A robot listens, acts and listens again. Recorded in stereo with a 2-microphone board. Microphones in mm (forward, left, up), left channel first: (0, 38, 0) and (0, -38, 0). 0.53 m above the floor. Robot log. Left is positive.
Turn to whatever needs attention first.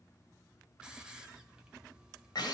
cmd idle
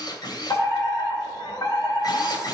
note: The fire alarm: about 60° left or 120° left.
cmd yaw +60
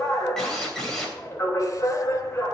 note: So it is at 40° left.
cmd yaw +40
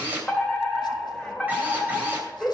note: The fire alarm is now 10° left.
cmd yaw +10
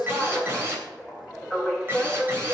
end: Facing the fire alarm, 2 to 4 m away.